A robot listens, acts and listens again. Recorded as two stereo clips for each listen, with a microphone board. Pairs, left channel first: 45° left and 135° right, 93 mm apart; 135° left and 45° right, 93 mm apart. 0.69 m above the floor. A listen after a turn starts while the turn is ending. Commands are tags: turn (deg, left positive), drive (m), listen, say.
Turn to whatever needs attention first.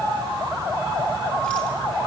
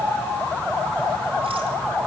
<listen/>
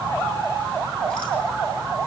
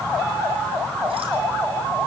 <listen/>
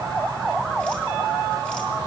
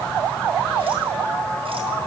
<say>I can't make out anything urgent to turn to.</say>